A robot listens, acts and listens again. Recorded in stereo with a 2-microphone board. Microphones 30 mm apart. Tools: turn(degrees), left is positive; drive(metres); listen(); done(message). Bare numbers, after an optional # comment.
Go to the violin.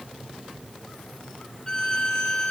# The violin: about 20° left or 160° left.
turn(20)
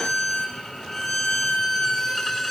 drive(1.0)
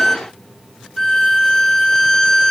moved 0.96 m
drive(1.0)
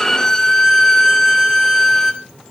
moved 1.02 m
# The violin is now 15° left.
turn(15)
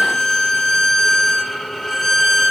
drive(1.0)
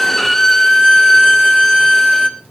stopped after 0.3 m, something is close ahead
done("Arrived at the violin, straight ahead.")